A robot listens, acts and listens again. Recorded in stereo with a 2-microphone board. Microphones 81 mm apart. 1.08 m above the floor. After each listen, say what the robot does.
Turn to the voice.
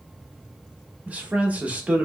Turn 20° right.
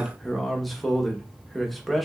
Facing the man speaking.